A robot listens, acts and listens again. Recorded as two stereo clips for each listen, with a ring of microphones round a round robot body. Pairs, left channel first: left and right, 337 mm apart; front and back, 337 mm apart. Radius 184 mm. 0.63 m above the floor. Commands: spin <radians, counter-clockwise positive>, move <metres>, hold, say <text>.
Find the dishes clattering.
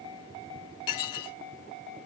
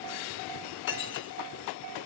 spin 1.05
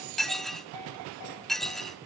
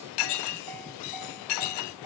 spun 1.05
say Found it: dishes clattering, straight ahead.